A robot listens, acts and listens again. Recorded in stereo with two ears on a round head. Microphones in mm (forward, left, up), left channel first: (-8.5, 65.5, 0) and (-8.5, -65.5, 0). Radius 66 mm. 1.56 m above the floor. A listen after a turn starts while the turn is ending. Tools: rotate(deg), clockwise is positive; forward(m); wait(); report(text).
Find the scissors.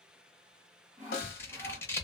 rotate(-15)
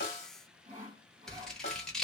report("Found it: scissors, straight ahead.")